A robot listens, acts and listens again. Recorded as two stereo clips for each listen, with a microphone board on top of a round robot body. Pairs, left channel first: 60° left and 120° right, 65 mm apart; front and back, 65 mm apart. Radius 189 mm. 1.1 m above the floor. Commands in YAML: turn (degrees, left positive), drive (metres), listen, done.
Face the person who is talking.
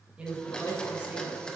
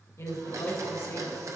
turn: -45
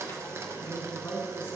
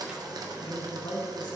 done: "Facing the woman speaking."